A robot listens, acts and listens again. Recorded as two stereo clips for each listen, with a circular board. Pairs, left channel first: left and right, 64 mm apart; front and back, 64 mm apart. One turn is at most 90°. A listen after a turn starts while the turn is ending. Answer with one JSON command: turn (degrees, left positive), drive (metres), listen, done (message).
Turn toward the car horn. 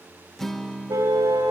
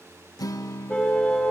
{"turn": -75}
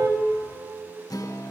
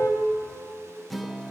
{"listen": true}
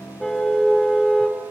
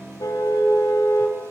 {"turn": 10}
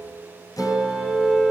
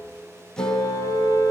{"done": "Facing the car horn, 2 to 4 m away."}